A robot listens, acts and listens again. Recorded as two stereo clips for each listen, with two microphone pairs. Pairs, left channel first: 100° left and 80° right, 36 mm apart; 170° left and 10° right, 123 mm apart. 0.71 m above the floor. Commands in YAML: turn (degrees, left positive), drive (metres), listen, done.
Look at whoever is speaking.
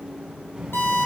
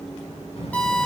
turn: -160
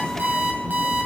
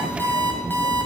turn: -15
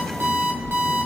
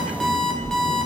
turn: -10
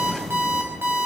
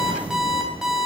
done: "Facing the child speaking, over 4 m away."